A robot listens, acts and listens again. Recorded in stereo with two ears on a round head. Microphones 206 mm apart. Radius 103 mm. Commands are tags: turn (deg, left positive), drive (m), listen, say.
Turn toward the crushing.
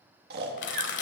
<turn deg="55"/>
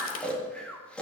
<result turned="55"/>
<listen/>
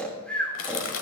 <turn deg="65"/>
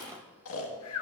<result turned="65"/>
<turn deg="-20"/>
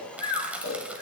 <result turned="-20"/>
<say>Facing the crushing, 1 to 2 m away.</say>